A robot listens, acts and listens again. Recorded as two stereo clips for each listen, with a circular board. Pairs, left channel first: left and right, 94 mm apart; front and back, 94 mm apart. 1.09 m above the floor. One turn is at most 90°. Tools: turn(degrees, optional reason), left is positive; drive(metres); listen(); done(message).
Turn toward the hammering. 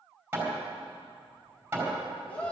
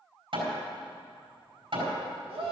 turn(degrees=-90, reason="The hammering: 160° right.")
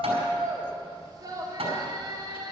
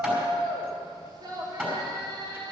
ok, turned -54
turn(degrees=-90, reason="The hammering is now 105° right.")
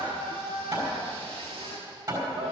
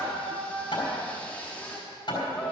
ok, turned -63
turn(degrees=-40, reason="The hammering is now 40° right.")
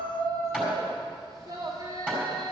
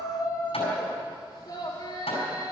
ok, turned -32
turn(degrees=-10, reason="The hammering is now 10° right.")
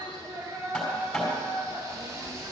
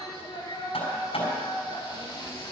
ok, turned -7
done("Facing the hammering, over 4 m away.")